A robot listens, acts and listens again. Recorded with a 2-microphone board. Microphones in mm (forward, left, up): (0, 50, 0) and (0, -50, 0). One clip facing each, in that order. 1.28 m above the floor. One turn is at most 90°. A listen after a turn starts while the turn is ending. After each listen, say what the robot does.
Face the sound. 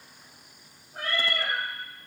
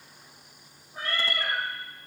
Turn 60° left.
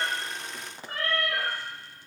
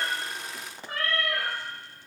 Turn 35° left.
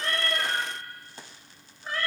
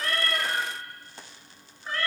Facing the cat meowing, 2 to 4 m away.